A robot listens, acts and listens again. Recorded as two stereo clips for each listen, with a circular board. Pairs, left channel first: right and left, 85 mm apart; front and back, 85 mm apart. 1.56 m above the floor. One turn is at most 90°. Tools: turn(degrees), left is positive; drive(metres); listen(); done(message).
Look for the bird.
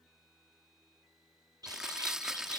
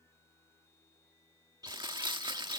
turn(degrees=90)
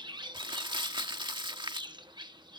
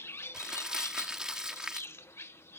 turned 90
turn(degrees=60)
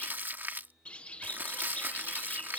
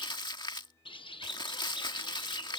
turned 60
turn(degrees=-15)
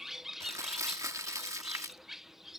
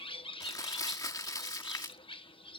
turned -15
done("Found it: a bird, straight ahead.")